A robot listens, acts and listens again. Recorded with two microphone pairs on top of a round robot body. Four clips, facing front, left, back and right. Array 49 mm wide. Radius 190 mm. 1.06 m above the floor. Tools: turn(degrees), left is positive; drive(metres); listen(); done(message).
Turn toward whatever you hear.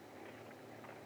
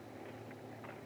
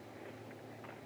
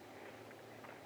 listen()
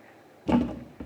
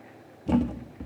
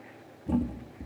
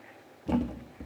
done("Found it: a thud, straight ahead.")